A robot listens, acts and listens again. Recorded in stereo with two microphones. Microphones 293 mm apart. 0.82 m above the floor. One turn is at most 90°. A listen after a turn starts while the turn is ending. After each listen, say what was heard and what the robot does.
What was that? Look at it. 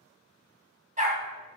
The dog barking: about 25° right or 155° right. Turn 25° right.
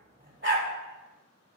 The dog barking: about 35° right or 145° right. Turn 35° right.
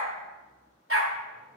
So it is at 140° right. Turn 90° right.
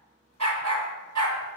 The dog barking is now 70° right. Turn 70° right.
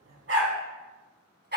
The dog barking is now 35° right. Turn 35° right.
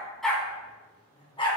The dog barking is now 15° left. Turn 15° left.
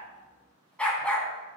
Found it: a dog barking, straight ahead, 1 to 2 m away.